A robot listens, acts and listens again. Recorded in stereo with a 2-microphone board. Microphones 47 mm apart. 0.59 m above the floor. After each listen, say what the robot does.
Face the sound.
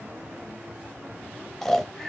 Turn 30° left.
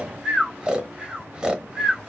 Turn 20° right.
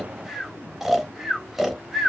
Facing the snoring, under 1 m away.